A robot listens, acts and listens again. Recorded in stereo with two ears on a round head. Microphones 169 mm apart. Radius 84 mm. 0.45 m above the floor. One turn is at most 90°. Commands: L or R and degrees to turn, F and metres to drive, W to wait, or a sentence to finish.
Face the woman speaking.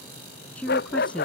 L30
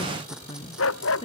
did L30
L90
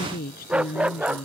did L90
L55
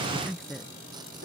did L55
Facing the woman speaking.